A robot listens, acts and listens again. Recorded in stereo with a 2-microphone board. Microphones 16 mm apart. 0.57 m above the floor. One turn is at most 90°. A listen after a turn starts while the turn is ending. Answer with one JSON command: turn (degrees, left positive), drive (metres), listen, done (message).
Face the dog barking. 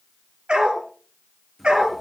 {"turn": -90}
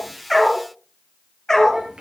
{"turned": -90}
{"turn": 20}
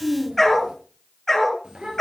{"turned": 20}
{"turn": 20}
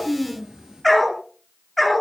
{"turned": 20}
{"done": "Found it: a dog barking, straight ahead, 2 to 4 m away."}